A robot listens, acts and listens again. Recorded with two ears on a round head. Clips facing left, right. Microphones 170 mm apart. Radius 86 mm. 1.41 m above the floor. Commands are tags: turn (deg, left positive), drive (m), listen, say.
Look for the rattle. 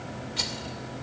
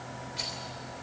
<turn deg="70"/>
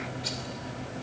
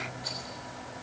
<turn deg="35"/>
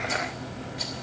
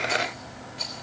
<turn deg="10"/>
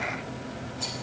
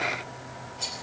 <say>Found it: a rattle, straight ahead.</say>